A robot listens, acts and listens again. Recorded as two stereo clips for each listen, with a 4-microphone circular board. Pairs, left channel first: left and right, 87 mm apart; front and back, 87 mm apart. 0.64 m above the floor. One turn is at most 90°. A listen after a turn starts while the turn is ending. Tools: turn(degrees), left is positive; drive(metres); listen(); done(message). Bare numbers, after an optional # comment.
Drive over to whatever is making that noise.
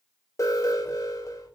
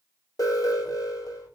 # The alarm: 40° left.
turn(40)
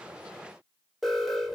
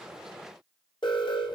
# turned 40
drive(1.0)
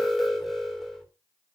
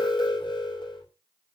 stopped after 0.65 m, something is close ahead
done("Something is in my way. I am facing the alarm but have not reached it.")